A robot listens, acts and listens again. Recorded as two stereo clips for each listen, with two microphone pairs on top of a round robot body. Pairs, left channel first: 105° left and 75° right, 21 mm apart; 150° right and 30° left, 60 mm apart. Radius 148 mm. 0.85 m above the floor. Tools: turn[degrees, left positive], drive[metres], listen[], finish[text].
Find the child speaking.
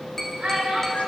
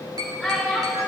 Thought: The child speaking: 55° right.
Action: turn[-55]
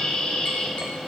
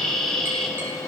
Action: listen[]
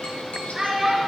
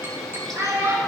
Action: finish[Found it: a child speaking, straight ahead.]